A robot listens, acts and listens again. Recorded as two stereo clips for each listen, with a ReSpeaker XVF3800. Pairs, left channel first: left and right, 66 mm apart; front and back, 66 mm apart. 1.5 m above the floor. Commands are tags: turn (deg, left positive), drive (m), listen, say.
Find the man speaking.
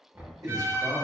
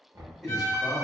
<turn deg="-100"/>
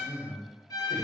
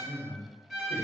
<say>Facing the man speaking.</say>